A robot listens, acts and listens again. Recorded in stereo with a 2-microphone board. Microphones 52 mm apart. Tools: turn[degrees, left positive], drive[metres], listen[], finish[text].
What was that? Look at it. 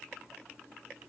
Action: listen[]
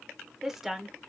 Action: turn[30]
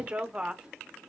Thought: So it is at 15° right.
Action: turn[-15]
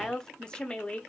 Thought: The woman speaking is now 25° left.
Action: turn[25]
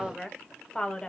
Thought: The woman speaking is now 20° left.
Action: turn[20]
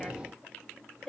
Thought: The woman speaking is now 10° left.
Action: turn[10]
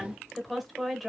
Action: finish[Found it: a woman speaking, straight ahead, 1 to 2 m away.]